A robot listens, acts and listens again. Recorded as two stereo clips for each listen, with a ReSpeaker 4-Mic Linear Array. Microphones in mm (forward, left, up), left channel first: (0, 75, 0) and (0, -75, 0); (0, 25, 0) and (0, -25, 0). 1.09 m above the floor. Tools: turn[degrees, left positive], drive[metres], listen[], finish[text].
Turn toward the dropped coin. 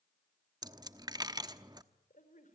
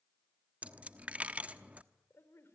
Thought: The dropped coin: about 25° right or 155° right.
Action: turn[-25]
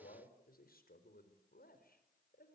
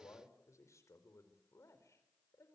Action: listen[]
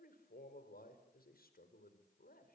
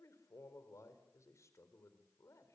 Action: finish[I heard a dropped coin, but can't make it out now. It was about straight ahead or 130° right.]